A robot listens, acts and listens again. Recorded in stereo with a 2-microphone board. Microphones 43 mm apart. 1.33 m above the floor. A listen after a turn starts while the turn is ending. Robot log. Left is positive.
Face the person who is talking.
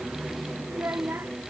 note: The child speaking: about 60° right or 120° right.
cmd yaw -60
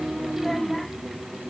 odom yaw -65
cmd idle
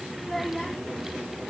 end: Found it: a child speaking, straight ahead.